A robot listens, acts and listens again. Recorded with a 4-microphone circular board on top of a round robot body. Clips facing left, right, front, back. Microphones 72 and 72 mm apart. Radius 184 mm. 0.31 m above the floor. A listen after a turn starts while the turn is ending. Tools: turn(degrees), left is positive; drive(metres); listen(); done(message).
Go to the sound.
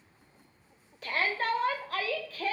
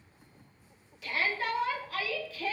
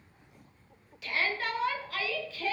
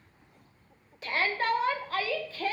turn(degrees=130)
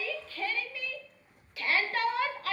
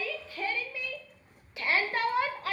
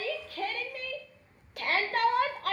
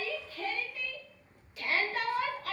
turn(degrees=-25)
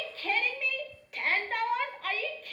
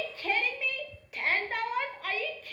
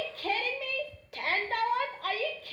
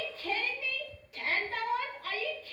drive(metres=1.0)
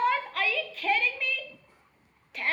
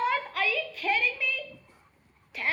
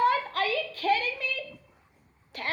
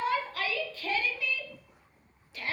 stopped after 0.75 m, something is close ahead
done("Arrived at the shout, straight ahead.")